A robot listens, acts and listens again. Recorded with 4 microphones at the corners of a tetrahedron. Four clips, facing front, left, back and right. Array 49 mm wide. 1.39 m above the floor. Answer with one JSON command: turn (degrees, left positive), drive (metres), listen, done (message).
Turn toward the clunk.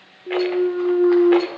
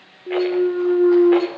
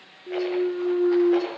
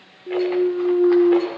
{"turn": 50}
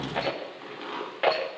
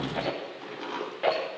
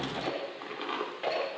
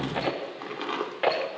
{"done": "I heard a clunk from this way, but can't make it out now."}